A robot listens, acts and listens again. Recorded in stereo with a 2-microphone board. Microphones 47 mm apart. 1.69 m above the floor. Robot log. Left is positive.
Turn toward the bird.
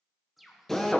cmd yaw +30
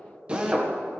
cmd idle
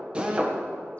cmd idle
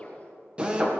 end: I heard a bird, but can't make it out now. It was about 30° right or 150° left.